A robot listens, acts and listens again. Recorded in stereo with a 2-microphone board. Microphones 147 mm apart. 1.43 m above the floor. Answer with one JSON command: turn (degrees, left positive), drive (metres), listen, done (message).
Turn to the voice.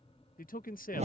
{"turn": 75}
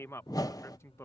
{"turn": 20}
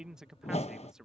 {"done": "Facing the man speaking."}